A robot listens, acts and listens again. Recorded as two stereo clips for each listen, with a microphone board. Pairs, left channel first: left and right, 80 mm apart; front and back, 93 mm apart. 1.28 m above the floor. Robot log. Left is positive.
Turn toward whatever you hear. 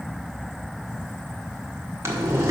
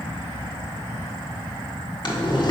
note: The boiling: 35° right.
cmd yaw -35
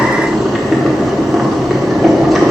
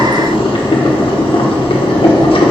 end: Facing the boiling.